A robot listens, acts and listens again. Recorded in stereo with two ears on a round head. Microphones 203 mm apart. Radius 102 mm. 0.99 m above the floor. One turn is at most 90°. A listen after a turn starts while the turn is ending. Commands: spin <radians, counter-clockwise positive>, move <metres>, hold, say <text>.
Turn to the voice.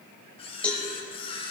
hold
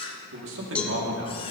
spin -1.05
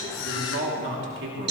spin -0.96
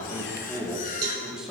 say Facing the man speaking, 2 to 4 m away.